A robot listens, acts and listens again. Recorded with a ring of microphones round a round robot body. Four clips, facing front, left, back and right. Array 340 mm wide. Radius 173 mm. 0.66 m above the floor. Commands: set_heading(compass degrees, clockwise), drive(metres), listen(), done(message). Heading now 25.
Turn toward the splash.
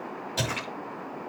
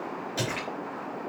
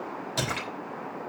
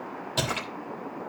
set_heading(120)
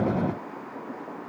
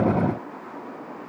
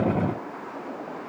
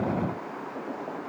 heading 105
set_heading(120)
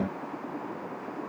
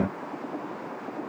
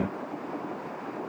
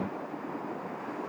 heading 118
done("Facing where the splash came from. I can't hear it now.")